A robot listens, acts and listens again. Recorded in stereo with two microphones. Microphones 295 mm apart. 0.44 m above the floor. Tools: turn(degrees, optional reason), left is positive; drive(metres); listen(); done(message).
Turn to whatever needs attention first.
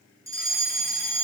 turn(degrees=-30)
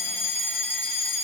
turn(degrees=-140, reason="So it is at 140° right.")
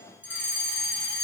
done("Found it: a fire alarm, straight ahead.")